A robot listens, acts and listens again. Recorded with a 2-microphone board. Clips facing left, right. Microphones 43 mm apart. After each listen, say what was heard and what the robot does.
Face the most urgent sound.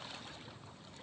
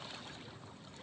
Keep listening.
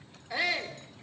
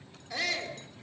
The shout: about 15° left or 165° left. Turn 15° left.
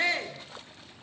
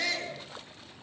So it is at 150° left. Turn 150° left.
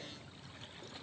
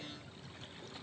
Keep listening.
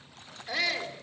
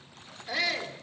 Found it: a shout, straight ahead.